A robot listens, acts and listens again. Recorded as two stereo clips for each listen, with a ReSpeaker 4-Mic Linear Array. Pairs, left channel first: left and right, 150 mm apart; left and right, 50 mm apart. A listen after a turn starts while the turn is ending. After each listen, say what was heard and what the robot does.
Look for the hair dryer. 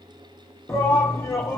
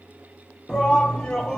Keep listening.
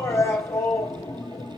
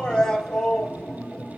Keep listening.
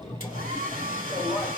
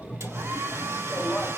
Turn 90° right.
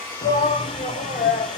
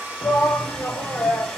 Facing the hair dryer, 2 to 4 m away.